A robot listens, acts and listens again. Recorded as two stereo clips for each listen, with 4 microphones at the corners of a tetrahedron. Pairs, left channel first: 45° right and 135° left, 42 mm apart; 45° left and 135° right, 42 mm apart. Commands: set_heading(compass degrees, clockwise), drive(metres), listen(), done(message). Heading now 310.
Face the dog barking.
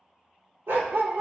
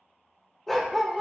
set_heading(170)
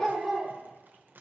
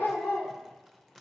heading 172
set_heading(137)
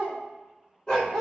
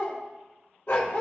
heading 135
set_heading(110)
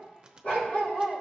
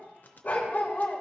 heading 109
done("Found it: a dog barking, straight ahead.")